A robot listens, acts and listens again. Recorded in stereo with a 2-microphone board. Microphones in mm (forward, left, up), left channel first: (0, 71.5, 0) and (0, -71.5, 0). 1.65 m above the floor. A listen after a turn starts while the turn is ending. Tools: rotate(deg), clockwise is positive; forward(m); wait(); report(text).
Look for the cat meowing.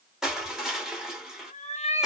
rotate(-40)
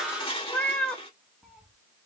report("Found it: a cat meowing, straight ahead, 1 to 2 m away.")